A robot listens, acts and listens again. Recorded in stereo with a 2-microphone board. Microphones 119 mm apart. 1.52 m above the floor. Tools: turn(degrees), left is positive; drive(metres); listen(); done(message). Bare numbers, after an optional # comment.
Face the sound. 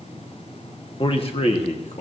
# The man speaking: about 70° left or 110° left.
turn(70)
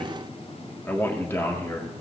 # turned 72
# So it is at 25° left.
turn(25)
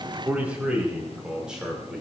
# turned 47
done("Found it: a man speaking, straight ahead.")